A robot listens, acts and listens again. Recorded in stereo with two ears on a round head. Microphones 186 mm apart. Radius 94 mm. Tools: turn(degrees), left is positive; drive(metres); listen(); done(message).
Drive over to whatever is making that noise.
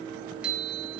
turn(degrees=-30)
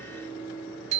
turn(degrees=-145)
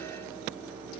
turn(degrees=15)
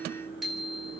drive(metres=1.0)
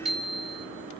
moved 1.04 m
drive(metres=1.0)
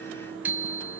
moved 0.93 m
turn(degrees=-10)
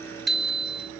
drive(metres=1.0)
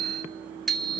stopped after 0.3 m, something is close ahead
done("Arrived at the bicycle bell, straight ahead.")